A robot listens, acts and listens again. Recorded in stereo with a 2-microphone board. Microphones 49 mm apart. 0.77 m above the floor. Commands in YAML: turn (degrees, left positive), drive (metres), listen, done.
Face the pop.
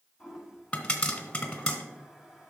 turn: 20
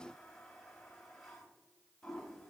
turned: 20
listen: true
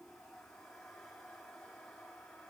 done: "I heard a pop, but can't make it out now. It was about straight ahead or 140° left."